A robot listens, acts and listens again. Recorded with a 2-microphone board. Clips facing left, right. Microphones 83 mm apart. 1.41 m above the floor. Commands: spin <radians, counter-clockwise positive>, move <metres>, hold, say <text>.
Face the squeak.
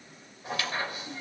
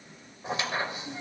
spin -0.44
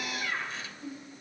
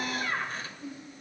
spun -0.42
spin -2.27
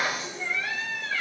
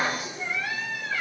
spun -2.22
say Facing the squeak.